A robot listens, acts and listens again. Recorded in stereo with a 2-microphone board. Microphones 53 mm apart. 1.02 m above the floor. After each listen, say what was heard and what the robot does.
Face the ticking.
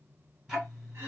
Turn 30° right.
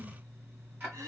So it is at 140° right. Turn 140° right.
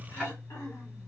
The ticking is now 20° left. Turn 20° left.
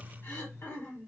Found it: ticking, straight ahead.